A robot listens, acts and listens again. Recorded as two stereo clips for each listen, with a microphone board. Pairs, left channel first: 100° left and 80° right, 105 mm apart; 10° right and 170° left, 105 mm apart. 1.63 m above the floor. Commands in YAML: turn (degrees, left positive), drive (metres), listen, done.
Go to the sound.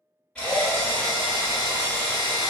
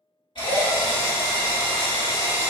turn: 20
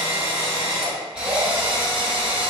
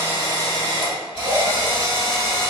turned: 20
drive: 1.0
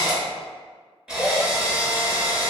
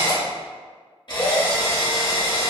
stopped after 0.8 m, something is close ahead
done: "Arrived at the drill, straight ahead."